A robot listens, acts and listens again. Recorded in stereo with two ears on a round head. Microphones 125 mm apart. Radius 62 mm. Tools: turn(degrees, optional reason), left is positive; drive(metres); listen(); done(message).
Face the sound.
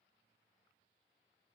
listen()
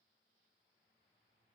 listen()
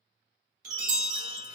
turn(degrees=-60, reason="The chime: about 60° right or 120° right.")
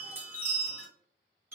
turn(degrees=-20, reason="So it is at 20° right.")
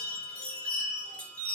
turn(degrees=10, reason="The chime is now 10° left.")
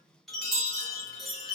done("Facing the chime, 1 to 2 m away.")